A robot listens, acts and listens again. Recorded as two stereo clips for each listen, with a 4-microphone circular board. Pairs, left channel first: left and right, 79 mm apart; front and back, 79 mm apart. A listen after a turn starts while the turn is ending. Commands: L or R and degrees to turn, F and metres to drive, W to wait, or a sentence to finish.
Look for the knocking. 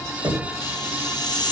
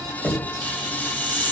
R75
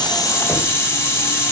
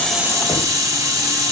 W
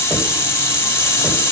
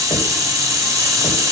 W
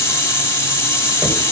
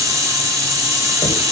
R15
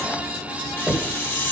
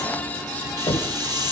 Found it: knocking, straight ahead.